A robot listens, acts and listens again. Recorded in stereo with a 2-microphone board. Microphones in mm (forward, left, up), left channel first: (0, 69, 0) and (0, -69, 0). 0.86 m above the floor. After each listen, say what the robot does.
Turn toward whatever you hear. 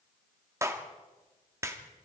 Turn 20° right.
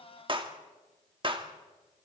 Turn 140° right.
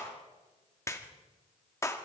Turn 25° left.
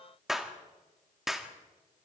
Facing the clap, 1 to 2 m away.